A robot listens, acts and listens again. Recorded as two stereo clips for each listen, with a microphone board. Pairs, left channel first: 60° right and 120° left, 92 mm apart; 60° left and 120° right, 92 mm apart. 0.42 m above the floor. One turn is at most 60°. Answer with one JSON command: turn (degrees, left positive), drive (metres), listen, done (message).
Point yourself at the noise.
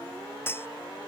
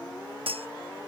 {"turn": -60}
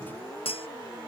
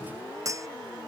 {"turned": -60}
{"turn": -60}
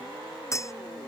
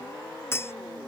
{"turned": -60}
{"done": "Facing the cutlery clinking."}